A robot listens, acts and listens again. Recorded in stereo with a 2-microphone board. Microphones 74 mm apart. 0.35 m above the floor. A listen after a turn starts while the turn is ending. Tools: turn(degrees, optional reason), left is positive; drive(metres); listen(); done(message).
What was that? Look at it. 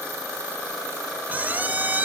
turn(degrees=-25, reason="The squeak: about 25° right or 155° right.")
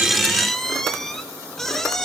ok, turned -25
done("Found it: a squeak, straight ahead, 1 to 2 m away.")